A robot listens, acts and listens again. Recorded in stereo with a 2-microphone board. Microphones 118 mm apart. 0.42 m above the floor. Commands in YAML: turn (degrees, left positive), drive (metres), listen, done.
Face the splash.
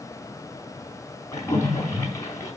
turn: 25
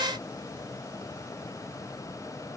listen: true
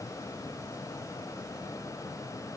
done: "I heard a splash, but can't make it out now. It was about straight ahead or 130° left."